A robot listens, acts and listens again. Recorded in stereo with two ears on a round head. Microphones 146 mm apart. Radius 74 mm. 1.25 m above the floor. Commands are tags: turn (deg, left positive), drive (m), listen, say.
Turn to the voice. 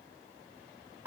<listen/>
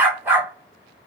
<listen/>
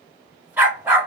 <say>I can't make out anyone speaking, only a dog barking.</say>